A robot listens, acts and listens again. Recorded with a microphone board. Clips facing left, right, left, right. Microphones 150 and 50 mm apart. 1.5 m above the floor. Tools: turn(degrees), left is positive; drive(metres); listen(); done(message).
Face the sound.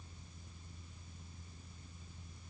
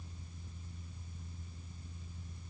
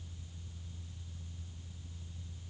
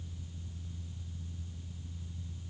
listen()
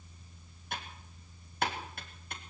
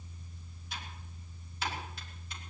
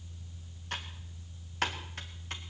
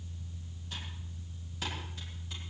turn(degrees=55)
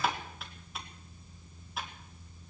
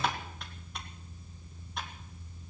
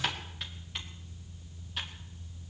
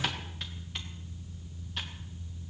done("Found it: typing on a keyboard, straight ahead, 2 to 4 m away.")